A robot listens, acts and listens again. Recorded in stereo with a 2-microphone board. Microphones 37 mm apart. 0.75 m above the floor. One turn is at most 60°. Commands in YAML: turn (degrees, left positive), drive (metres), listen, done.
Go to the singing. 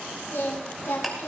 turn: 60
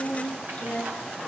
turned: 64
turn: 45
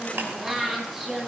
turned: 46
drive: 1.0
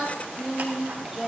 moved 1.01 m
drive: 1.0
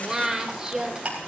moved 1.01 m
turn: -15
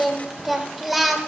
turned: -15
drive: 1.0
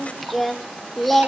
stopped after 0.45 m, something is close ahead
done: "I am next to the singing."